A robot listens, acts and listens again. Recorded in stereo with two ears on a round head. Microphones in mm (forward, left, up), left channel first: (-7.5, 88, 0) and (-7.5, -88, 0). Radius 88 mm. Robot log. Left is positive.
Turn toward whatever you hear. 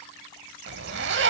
note: The zipper: about 60° right or 120° right.
cmd yaw -60
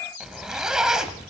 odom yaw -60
end: Facing the zipper, under 1 m away.